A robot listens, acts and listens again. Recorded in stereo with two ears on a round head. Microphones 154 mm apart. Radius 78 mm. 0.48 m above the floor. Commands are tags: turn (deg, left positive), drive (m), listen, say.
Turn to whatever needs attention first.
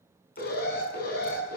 <turn deg="60"/>
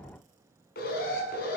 <turn deg="60"/>
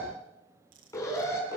<turn deg="15"/>
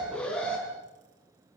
<say>Found it: an alarm, straight ahead, over 4 m away.</say>